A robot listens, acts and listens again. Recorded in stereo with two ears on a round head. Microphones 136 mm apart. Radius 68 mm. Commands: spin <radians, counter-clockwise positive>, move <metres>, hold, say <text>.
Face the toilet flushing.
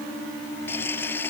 spin 0.52
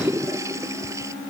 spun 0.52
spin -0.35
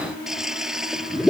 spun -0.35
say Found it: a toilet flushing, straight ahead.